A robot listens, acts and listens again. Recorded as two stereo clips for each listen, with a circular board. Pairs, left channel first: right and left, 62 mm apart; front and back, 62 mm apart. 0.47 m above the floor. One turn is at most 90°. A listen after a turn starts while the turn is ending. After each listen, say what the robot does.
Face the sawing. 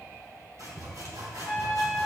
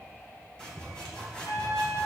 Turn 80° left.
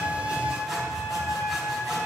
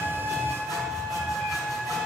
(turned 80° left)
Keep listening.
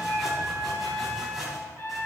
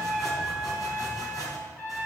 Found it: sawing, straight ahead.